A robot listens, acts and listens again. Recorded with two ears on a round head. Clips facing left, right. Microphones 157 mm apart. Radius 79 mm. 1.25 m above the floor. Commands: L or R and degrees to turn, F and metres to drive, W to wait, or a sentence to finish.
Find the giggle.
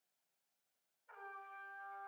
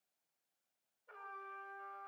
W
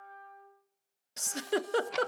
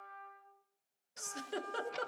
L70
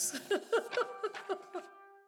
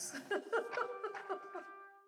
L40
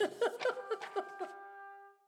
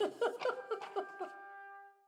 L10
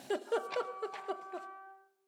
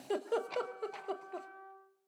Facing the giggle, under 1 m away.